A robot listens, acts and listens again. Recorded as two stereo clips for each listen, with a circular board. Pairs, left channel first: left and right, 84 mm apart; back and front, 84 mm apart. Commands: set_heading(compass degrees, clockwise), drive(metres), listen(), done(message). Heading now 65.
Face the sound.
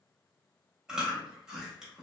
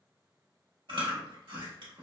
set_heading(75)
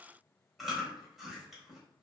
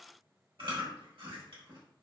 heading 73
done("Facing the chewing.")